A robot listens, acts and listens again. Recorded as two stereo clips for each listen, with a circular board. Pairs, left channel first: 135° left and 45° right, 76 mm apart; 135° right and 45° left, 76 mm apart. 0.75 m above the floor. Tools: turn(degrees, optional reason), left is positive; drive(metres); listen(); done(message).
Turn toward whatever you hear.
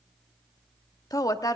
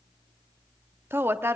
turn(degrees=105, reason="The woman speaking: 105° left.")
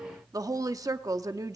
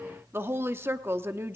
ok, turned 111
turn(degrees=-10, reason="The woman speaking is now 10° right.")
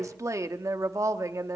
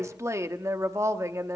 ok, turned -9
done("Found it: a woman speaking, straight ahead, under 1 m away.")